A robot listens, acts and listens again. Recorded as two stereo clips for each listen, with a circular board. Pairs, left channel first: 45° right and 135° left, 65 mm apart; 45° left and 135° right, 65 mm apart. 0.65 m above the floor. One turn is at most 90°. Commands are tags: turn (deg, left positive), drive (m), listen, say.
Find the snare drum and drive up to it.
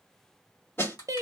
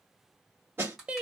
<turn deg="-90"/>
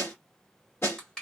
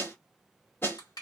<drive m="1.0"/>
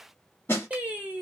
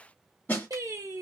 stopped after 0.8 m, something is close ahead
<turn deg="-10"/>
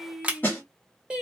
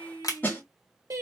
<say>Arrived at the snare drum, straight ahead.</say>